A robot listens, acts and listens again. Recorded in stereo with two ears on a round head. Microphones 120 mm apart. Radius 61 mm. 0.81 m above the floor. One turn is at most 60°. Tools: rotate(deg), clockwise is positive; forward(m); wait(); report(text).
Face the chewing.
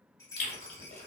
rotate(-55)
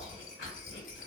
rotate(-60)
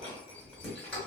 rotate(-15)
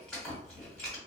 report("Facing the chewing.")